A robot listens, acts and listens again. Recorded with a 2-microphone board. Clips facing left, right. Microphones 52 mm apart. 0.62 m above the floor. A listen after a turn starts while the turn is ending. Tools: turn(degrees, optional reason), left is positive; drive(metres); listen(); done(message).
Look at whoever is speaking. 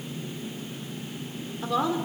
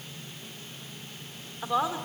turn(degrees=-15, reason="The woman speaking: about 15° right or 165° right.")
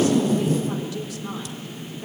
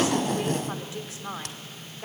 turn(degrees=-150, reason="So it is at 150° right.")
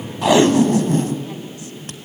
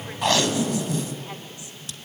listen()
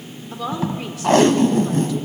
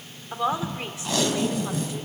turn(degrees=-25, reason="The woman speaking is now 25° right.")
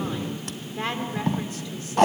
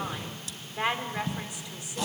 turn(degrees=-15, reason="The woman speaking is now 15° right.")
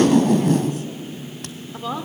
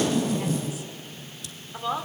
done("Facing the woman speaking, 1 to 2 m away.")